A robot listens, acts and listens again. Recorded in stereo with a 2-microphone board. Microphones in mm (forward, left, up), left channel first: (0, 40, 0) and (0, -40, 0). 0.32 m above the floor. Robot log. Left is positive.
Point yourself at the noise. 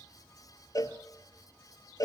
note: The cowbell: about 50° left or 130° left.
cmd yaw +50
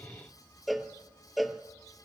end: Facing the cowbell.